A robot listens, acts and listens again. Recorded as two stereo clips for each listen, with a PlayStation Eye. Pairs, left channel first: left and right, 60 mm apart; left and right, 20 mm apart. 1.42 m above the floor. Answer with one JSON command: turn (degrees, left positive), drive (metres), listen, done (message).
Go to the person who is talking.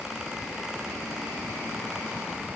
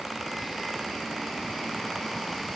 {"listen": true}
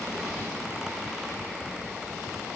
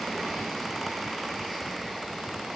{"listen": true}
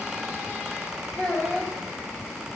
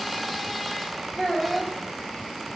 {"turn": 25}
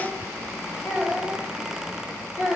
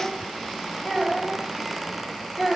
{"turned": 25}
{"turn": 125}
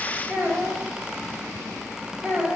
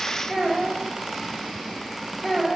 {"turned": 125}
{"turn": -30}
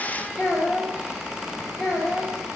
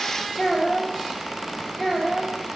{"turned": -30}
{"turn": -15}
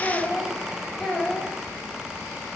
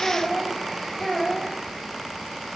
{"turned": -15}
{"drive": 1.0}
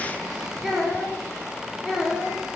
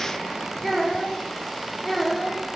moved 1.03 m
{"drive": 1.0}
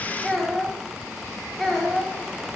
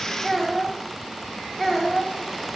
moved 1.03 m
{"drive": 1.0}
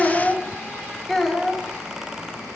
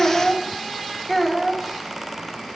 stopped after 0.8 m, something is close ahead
{"done": "I am next to the child speaking."}